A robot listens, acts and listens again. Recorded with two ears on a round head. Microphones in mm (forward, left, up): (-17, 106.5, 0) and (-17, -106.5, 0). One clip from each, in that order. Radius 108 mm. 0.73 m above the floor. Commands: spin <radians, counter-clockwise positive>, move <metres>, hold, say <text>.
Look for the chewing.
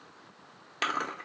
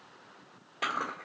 spin 1.05
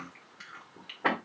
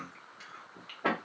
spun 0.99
say Facing the chewing, 1 to 2 m away.